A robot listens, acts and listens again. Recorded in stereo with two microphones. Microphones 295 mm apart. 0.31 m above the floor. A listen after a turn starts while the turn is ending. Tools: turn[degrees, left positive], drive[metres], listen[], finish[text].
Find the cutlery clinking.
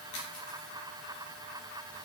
Action: listen[]
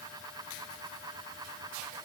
Action: listen[]
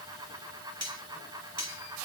Thought: The cutlery clinking: about 65° right or 115° right.
Action: turn[-65]
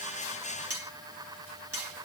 Thought: So it is at 50° right.
Action: turn[-50]
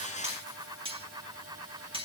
Thought: The cutlery clinking is now 20° right.
Action: turn[-20]
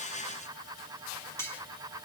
Thought: The cutlery clinking is now 10° left.
Action: turn[10]
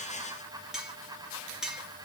Action: finish[Facing the cutlery clinking, 2 to 4 m away.]